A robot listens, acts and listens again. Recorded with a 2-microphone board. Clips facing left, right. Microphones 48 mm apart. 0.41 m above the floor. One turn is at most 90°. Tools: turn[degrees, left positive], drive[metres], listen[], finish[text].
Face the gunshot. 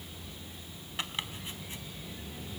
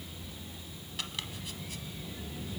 Action: listen[]
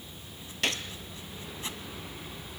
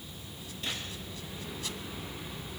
Action: turn[90]
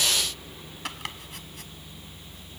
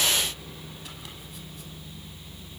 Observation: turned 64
Thought: Nothing new. It was at 25° left.
Action: turn[25]
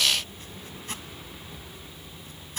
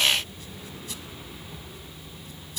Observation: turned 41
Thought: Nothing new. It was at 15° right.
Action: turn[-15]
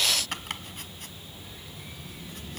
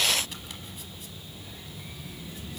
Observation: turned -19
Action: finish[I heard a gunshot from this way, but can't make it out now.]